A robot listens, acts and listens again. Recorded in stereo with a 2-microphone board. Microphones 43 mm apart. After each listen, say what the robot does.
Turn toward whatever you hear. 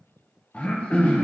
Turn 30° left.
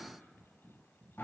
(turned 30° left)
Turn 120° left.
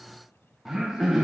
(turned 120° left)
Turn 10° right.
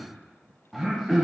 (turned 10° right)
Facing the throat clearing, under 1 m away.